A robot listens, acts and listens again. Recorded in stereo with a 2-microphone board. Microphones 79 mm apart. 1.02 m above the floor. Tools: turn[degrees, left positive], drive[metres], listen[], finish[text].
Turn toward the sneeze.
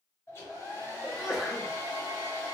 Action: turn[-30]
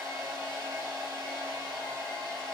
Action: listen[]
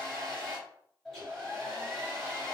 Action: finish[I heard a sneeze, but can't make it out now. It was about 20° left or 140° right.]